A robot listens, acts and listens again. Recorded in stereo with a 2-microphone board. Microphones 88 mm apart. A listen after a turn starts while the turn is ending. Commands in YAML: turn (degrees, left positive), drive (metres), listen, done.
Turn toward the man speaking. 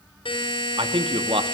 turn: -90
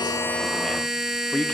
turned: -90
turn: 15
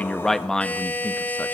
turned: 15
turn: 10
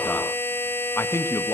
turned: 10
turn: 35
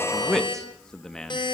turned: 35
done: "Found it: a man speaking, straight ahead, 1 to 2 m away."